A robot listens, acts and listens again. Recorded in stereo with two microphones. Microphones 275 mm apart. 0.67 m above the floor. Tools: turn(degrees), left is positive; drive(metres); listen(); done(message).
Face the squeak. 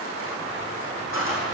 turn(degrees=50)
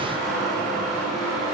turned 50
done("Facing the squeak, over 4 m away.")